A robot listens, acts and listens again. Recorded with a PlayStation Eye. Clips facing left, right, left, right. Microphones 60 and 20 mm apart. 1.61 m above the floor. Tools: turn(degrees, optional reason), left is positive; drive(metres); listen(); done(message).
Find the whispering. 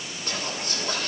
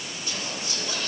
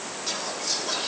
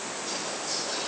turn(degrees=50, reason="The whispering: about 50° left or 130° left.")
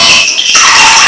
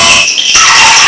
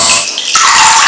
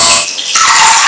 listen()
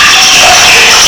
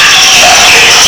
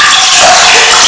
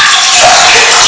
listen()
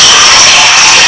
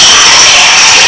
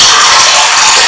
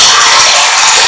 done("I heard whispering, but can't make it out now. It was about straight ahead or 80° left.")